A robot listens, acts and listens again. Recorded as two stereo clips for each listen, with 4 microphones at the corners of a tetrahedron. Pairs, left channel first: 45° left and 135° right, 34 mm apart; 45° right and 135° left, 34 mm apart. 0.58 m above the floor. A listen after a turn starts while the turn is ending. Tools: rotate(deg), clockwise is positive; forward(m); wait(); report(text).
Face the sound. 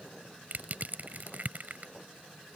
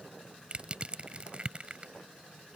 rotate(170)
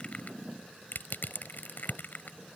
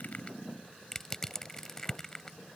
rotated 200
rotate(-30)
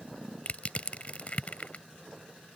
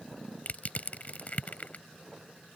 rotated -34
report("Found it: crushing, straight ahead.")